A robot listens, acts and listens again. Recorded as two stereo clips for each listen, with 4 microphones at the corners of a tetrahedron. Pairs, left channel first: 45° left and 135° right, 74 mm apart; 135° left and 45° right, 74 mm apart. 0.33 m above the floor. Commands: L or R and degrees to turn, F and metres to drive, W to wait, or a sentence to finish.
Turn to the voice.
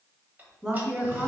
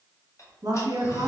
R65
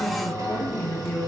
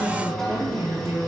R15
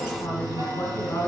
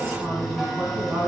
Found it: a woman speaking, straight ahead.